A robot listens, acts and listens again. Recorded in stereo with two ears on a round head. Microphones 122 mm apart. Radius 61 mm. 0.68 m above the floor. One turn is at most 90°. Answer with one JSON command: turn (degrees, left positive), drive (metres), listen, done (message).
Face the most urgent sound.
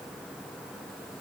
{"listen": true}
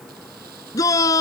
{"turn": 25}
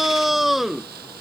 {"done": "Facing the shout."}